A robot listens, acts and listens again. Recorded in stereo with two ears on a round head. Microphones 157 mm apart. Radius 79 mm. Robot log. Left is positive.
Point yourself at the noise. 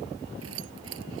cmd yaw -90
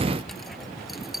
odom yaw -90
end: Found it: keys jangling, straight ahead.